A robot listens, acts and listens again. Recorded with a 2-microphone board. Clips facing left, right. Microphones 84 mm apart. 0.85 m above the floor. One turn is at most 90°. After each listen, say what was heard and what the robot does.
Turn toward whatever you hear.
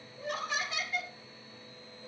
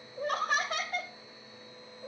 The laughter: about 40° right or 140° right. Turn 40° right.
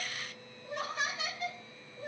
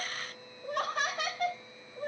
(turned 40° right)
So it is at 130° right. Turn 90° right.
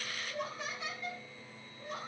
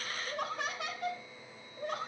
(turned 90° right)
The laughter is now 80° right. Turn 80° right.
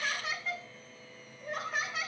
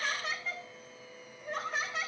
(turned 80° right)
Found it: laughter, straight ahead, 2 to 4 m away.